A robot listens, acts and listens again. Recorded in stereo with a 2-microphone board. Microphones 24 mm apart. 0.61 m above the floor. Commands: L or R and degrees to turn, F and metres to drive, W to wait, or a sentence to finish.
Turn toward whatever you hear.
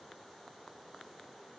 W
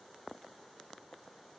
W
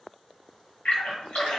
L60
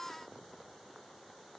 W
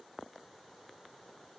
I heard a splash, but can't make it out now. It was about straight ahead or 60° left.